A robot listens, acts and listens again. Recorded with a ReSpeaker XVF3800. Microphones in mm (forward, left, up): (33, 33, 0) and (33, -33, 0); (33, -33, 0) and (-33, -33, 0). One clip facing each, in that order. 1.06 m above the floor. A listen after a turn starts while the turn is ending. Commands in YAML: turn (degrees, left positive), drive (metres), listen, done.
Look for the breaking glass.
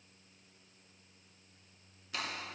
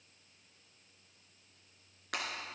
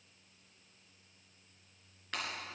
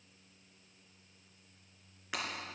turn: -100
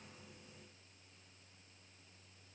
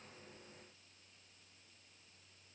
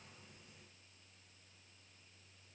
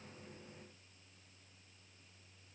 done: "Facing where the breaking glass came from. I can't hear it now."